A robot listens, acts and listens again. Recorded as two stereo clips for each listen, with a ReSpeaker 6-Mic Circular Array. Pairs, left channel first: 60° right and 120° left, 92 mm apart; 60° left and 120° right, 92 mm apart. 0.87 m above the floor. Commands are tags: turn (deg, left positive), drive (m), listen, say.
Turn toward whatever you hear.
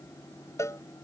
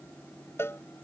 <say>Facing the cowbell.</say>